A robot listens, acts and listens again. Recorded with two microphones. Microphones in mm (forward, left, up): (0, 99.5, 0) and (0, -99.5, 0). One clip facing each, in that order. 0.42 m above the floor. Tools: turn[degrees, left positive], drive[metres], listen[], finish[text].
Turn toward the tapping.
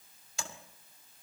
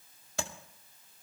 Thought: The tapping: about 60° right or 120° right.
Action: turn[-60]
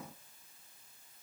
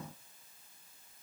Action: listen[]
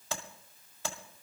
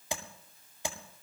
Thought: So it is at 15° right.
Action: turn[-15]
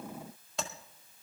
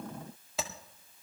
Action: finish[Facing the tapping.]